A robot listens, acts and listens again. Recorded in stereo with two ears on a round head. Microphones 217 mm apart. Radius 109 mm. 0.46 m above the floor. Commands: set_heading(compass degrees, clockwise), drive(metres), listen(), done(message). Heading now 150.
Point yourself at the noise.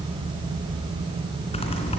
set_heading(125)
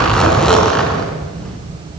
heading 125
done("Facing the zipper, 2 to 4 m away.")